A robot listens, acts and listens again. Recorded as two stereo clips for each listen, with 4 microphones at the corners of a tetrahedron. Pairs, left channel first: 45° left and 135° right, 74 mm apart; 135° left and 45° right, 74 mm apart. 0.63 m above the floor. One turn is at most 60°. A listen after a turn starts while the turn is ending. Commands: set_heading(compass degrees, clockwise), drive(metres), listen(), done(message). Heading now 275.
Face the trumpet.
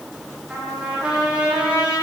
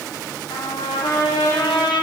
set_heading(215)
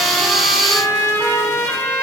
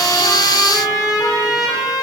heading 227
set_heading(167)
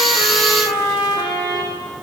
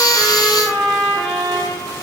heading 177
set_heading(132)
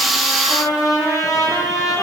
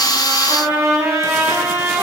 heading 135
done("Facing the trumpet, over 4 m away.")